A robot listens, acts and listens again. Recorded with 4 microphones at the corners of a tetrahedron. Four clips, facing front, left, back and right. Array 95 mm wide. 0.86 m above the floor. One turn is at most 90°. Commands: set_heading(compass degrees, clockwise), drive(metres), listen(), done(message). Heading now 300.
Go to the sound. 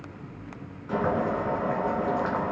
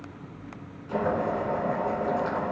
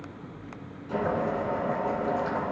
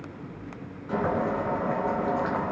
set_heading(335)
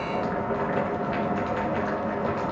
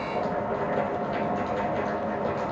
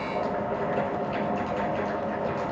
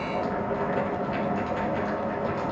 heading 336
drive(1.0)
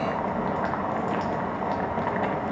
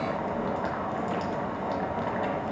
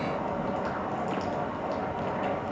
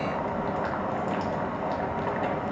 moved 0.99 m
drive(1.0)
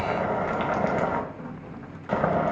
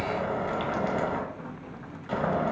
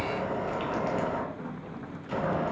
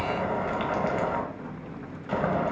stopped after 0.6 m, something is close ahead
done("Arrived at the boiling, straight ahead.")